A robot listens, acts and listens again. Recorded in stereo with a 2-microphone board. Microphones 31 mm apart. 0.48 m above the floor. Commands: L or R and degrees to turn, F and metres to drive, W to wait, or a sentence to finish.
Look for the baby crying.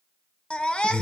L35
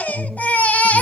L105
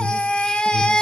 L35
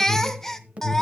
L15
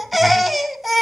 Found it: a baby crying, straight ahead.